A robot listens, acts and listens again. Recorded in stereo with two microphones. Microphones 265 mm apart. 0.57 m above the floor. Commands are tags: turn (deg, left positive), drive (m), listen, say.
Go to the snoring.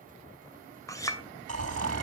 <turn deg="-65"/>
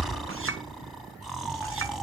<drive m="1.0"/>
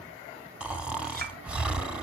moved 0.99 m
<drive m="1.0"/>
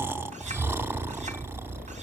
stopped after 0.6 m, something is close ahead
<turn deg="-10"/>
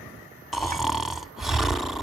<say>Arrived at the snoring, straight ahead.</say>